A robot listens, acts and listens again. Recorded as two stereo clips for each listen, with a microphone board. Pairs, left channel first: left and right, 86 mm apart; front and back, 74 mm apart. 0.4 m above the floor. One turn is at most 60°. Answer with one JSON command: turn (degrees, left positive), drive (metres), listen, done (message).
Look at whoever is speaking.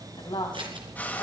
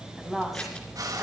{"turn": 60}
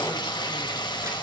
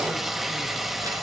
{"turn": 30}
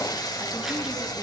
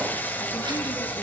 {"listen": true}
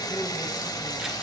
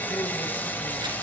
{"done": "I heard a woman speaking from this way, but can't make it out now."}